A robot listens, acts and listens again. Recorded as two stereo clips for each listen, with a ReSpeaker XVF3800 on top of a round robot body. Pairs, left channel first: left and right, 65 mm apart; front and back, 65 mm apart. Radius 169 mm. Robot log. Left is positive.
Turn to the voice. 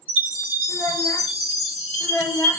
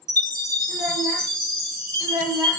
note: The child speaking: 110° left.
cmd yaw +110
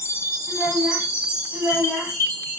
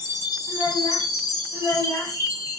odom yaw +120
end: Facing the child speaking, 1 to 2 m away.